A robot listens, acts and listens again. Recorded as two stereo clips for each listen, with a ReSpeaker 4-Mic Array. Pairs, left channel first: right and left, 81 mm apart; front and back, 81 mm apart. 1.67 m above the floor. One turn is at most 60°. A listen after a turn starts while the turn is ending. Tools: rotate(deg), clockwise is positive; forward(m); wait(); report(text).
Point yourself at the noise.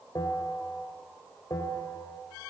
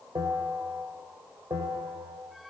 rotate(60)
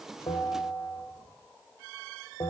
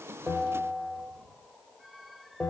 rotate(60)
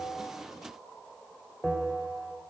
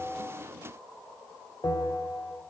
rotate(10)
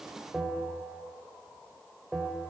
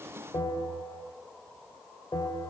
report("Facing the bell, over 4 m away.")